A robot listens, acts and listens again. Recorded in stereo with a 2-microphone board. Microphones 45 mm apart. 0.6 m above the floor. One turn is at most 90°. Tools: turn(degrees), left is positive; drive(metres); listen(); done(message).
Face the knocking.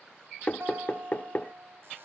turn(degrees=40)
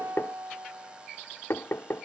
turn(degrees=90)
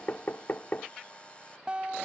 turn(degrees=45)
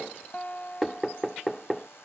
done("Facing the knocking.")